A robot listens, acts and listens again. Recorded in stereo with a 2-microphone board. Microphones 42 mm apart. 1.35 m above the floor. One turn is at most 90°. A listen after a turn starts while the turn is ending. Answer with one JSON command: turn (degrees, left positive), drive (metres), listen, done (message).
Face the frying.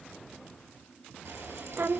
{"turn": -90}
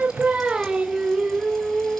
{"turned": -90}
{"listen": true}
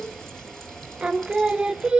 {"turn": 10}
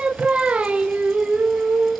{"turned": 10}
{"listen": true}
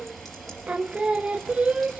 {"done": "Facing the frying."}